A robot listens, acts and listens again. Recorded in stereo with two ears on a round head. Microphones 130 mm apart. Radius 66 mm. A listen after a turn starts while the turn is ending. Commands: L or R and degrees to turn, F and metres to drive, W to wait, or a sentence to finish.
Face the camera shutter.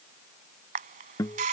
R50
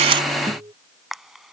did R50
Facing the camera shutter.